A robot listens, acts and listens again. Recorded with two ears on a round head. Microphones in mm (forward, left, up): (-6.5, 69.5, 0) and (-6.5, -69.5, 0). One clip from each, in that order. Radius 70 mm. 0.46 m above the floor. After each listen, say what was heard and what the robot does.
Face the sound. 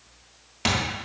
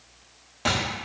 The thud: about 65° left or 115° left. Turn 65° left.
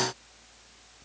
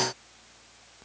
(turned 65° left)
Keep listening.
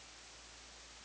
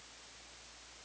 I heard a thud, but can't make it out now. It was about straight ahead or 50° left.